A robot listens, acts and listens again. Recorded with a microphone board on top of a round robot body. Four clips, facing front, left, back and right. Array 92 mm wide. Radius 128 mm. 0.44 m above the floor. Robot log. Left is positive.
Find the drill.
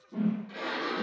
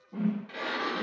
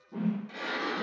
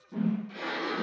cmd idle
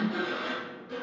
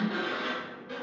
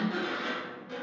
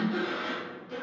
cmd idle
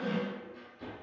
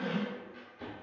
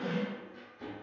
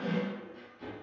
end: I can't make out a drill to turn to.